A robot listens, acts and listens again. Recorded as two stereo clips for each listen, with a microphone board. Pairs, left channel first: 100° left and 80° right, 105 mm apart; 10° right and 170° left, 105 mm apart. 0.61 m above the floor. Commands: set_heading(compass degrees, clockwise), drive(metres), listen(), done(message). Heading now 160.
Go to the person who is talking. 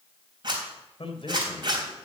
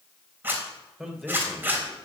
set_heading(80)
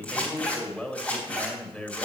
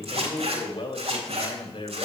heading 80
set_heading(60)
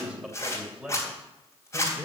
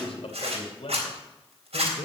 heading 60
drive(1.0)
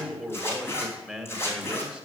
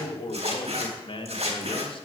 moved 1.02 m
drive(1.0)
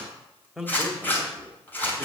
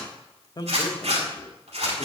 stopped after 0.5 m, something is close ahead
set_heading(50)
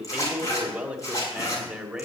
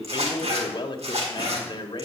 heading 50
done("Arrived at the man speaking, straight ahead.")